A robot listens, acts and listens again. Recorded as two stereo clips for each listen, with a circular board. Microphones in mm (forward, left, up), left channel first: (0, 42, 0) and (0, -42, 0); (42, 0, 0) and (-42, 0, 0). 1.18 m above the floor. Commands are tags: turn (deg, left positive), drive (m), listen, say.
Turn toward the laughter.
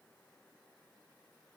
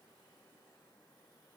<listen/>
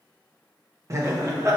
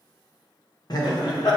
<turn deg="-35"/>
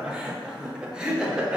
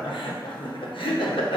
<turn deg="-10"/>
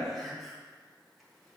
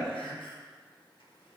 <say>Found it: laughter, straight ahead, under 1 m away.</say>